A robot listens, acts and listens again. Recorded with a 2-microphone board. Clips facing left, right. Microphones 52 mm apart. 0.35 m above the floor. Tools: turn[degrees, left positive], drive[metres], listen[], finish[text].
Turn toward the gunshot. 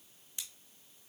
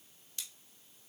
Action: listen[]
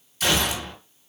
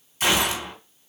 Thought: The gunshot: about 25° right or 155° right.
Action: turn[-25]
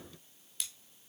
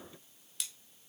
Action: listen[]
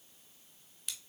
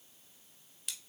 Action: finish[I heard a gunshot, but can't make it out now. It was about straight ahead or 130° right.]